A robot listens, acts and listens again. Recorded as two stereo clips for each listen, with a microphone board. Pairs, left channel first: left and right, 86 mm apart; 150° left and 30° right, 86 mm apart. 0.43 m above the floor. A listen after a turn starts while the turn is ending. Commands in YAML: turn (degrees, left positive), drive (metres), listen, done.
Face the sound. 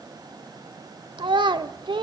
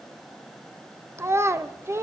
turn: -85
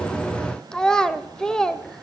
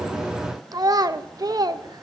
turn: 10
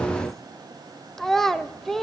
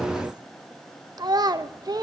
done: "Facing the child speaking."